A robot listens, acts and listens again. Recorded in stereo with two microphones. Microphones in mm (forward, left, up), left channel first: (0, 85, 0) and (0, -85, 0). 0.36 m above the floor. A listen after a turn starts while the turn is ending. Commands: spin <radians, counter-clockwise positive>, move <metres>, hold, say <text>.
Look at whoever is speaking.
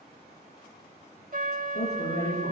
spin 1.57
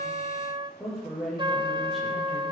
say Facing the woman speaking, over 4 m away.